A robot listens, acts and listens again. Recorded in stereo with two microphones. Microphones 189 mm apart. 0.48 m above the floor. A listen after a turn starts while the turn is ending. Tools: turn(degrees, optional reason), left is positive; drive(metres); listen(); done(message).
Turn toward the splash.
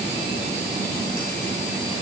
listen()
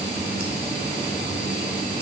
listen()
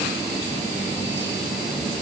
done("I can't make out a splash.")